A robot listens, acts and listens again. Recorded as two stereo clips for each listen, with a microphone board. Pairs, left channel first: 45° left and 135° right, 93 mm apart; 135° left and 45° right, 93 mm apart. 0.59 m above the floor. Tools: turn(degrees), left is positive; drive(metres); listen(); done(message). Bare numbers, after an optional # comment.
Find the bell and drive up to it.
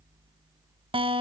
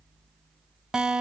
listen()
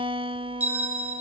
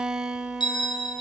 # The bell: 155° left.
turn(155)
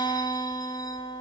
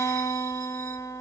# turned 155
listen()
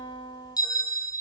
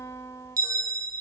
drive(1.0)
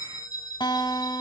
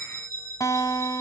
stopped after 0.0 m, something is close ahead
done("Something is in my way. I am facing the bell but have not reached it.")